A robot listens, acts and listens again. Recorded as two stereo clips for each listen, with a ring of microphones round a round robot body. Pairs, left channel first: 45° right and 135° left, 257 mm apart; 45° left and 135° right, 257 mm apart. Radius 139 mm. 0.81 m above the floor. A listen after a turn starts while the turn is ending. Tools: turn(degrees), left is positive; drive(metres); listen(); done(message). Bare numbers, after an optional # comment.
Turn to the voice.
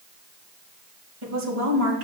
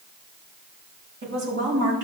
# The woman speaking: straight behind.
turn(180)
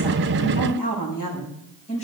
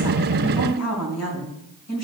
# The woman speaking is now 20° left.
turn(20)
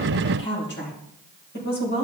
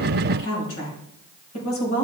# The woman speaking is now 10° left.
turn(10)
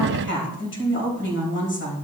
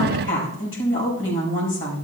done("Facing the woman speaking, over 4 m away.")